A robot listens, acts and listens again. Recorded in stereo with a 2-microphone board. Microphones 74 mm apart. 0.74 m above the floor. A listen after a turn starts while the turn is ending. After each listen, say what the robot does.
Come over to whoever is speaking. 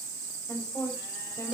Turn 45° left.
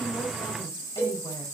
Keep listening.
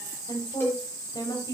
Turn 90° left.
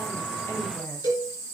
Keep listening.
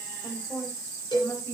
Turn 30° left.
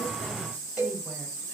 Keep listening.
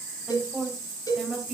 Drive 1.0 m forward.
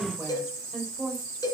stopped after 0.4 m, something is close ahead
Something is in my way. I am facing the woman speaking but have not reached it.